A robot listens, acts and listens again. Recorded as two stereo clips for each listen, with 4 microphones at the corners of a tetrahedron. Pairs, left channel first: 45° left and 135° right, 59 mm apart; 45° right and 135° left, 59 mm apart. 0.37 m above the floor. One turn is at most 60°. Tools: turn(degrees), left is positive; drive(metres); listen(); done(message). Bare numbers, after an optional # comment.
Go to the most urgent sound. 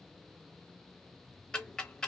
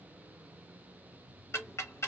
listen()
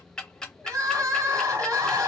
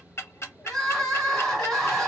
# The crying: 130° right.
turn(-60)
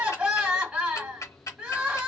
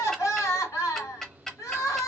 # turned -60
# The crying is now 60° right.
turn(-60)
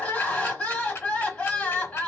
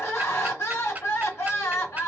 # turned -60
# The crying is now 15° right.
turn(-15)
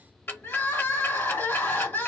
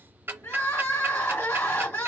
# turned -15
drive(1.0)
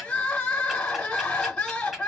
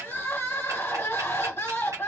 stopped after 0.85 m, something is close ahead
# The crying is now 15° right.
turn(-15)
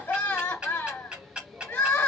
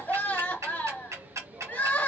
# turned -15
done("I am next to the crying.")